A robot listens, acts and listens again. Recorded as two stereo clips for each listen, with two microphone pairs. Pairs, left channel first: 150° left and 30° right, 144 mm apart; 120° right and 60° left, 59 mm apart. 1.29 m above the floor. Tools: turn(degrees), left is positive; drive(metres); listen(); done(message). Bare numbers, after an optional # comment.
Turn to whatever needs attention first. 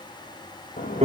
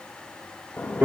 listen()
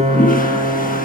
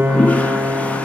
listen()
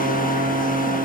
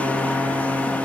done("I can't make out anything urgent, only a piano and a toilet flushing.")